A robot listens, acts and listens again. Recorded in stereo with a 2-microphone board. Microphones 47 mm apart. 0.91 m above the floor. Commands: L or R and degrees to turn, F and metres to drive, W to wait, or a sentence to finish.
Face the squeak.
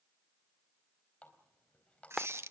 R70
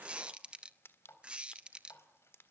R25
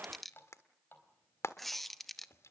Found it: a squeak, straight ahead, under 1 m away.